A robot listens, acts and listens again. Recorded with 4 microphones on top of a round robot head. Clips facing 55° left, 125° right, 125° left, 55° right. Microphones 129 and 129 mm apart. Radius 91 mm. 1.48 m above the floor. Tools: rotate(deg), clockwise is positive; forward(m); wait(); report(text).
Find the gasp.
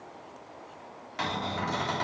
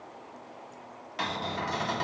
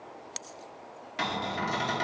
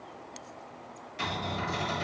wait()
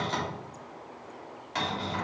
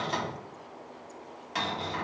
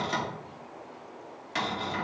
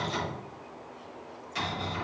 wait()
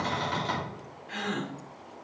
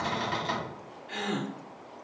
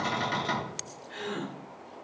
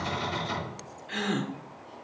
rotate(55)
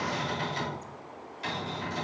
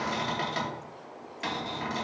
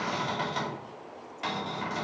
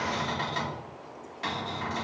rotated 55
report("I heard a gasp from this way, but can't make it out now.")